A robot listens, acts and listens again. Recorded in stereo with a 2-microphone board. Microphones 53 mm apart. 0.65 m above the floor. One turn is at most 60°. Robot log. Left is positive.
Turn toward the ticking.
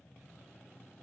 cmd idle
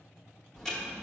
cmd yaw +30
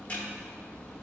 note: So it is at 140° left.
cmd yaw +60
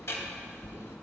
note: The ticking is now 65° left.
cmd yaw +60
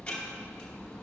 note: The ticking is now 20° left.
cmd yaw +20
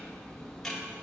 note: The ticking is now 10° left.
cmd yaw +10
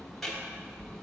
end: Facing the ticking.